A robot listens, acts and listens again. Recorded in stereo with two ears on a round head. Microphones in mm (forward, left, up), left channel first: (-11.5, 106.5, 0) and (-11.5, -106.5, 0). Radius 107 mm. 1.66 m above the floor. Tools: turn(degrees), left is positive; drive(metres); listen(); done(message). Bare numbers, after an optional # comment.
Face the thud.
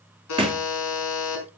# The thud: about 25° right or 155° right.
turn(-25)
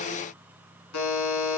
listen()
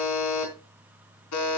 done("I heard a thud, but can't make it out now. It was about straight ahead or 130° right.")